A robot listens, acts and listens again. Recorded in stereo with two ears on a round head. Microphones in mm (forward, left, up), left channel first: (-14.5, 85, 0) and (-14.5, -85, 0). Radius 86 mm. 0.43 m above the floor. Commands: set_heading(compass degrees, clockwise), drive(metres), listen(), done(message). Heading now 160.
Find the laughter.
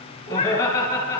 set_heading(140)
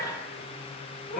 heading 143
listen()
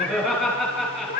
done("Facing the laughter.")